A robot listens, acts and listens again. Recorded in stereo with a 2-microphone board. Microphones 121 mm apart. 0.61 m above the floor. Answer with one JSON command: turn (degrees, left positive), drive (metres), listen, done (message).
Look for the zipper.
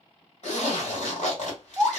{"turn": 90}
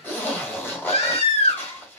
{"turn": 15}
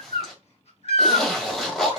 {"done": "Found it: a zipper, straight ahead, 1 to 2 m away."}